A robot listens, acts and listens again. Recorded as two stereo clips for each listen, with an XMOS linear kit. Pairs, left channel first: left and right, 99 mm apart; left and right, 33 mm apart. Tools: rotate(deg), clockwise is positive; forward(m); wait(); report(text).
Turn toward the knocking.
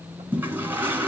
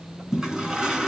wait()
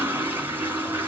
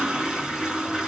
wait()
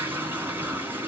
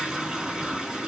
report("I can't make out knocking, only a toilet flushing.")